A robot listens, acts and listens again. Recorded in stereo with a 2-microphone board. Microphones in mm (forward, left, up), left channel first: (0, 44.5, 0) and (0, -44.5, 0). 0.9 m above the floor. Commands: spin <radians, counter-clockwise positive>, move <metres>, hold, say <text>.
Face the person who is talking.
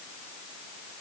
hold
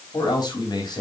spin 0.87
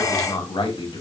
spin 1.31
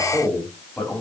spin 0.26
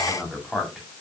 say Facing the man speaking.